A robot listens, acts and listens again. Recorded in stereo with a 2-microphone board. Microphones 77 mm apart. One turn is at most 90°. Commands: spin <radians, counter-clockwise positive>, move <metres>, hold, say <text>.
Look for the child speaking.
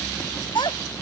spin 1.57
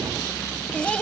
spin 0.26
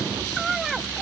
say Found it: a child speaking, straight ahead.